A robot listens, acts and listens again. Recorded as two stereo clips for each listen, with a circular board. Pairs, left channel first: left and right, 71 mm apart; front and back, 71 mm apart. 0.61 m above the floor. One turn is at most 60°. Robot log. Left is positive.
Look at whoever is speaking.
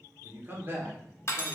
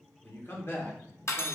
note: The man speaking: 35° right.
cmd yaw -35
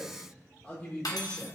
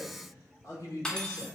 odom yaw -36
note: The man speaking is now 30° left.
cmd yaw +30
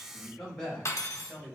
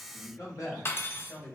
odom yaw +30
note: The man speaking is now 20° left.
cmd yaw +20
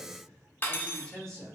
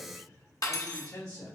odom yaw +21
note: The man speaking is now 10° left.
cmd yaw +10
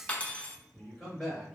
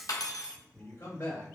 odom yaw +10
end: Found it: a man speaking, straight ahead, 2 to 4 m away.